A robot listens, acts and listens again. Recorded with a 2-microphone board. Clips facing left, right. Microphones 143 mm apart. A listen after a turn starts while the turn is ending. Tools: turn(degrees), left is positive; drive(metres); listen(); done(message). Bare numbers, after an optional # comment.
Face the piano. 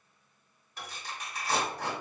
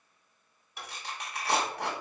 turn(-30)
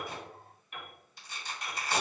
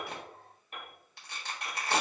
# So it is at 140° right.
turn(-140)
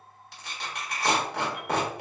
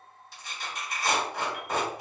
listen()
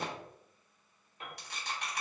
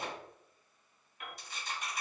# The piano is now 30° left.
turn(30)
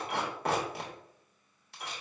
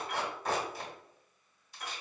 # The piano is now 10° left.
turn(10)
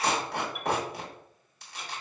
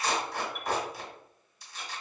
listen()
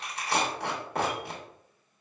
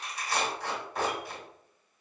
listen()
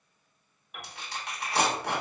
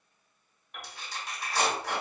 done("Found it: a piano, straight ahead, 1 to 2 m away.")